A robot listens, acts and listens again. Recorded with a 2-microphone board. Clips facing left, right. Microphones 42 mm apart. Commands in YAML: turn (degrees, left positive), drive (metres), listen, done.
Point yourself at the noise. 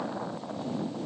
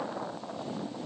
listen: true
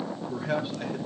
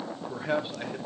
turn: -15
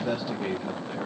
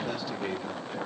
turn: 30
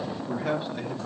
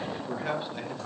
turn: -10
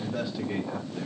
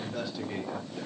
done: "Facing the man speaking, 2 to 4 m away."